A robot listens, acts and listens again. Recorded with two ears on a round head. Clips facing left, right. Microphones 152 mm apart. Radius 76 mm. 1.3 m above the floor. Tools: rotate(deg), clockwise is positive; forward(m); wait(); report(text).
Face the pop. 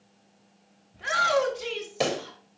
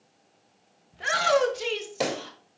rotate(30)
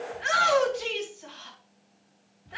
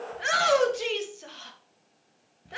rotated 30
wait()
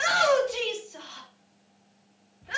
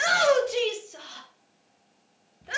report("I heard a pop, but can't make it out now. It was about 25° left or 145° right.")